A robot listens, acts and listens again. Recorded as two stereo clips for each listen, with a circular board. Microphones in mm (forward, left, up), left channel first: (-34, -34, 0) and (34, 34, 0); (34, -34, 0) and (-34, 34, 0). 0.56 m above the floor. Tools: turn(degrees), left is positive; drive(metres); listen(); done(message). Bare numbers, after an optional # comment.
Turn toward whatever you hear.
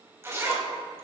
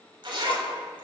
# The zipper: 105° left.
turn(105)
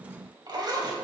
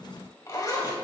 done("Facing the zipper, 2 to 4 m away.")